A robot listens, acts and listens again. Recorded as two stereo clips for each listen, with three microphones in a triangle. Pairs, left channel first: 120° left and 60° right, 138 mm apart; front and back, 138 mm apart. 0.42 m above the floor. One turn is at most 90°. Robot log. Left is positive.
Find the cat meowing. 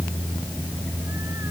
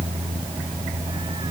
cmd idle
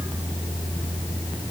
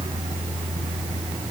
cmd idle
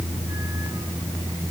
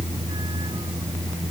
end: I can't make out a cat meowing to turn to.